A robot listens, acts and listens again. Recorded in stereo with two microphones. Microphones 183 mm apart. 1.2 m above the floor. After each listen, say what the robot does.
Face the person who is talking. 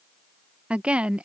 Turn 30° right.
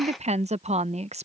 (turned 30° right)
Turn 145° right.
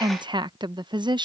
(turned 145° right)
Turn 25° right.
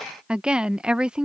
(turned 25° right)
Found it: a woman speaking, straight ahead.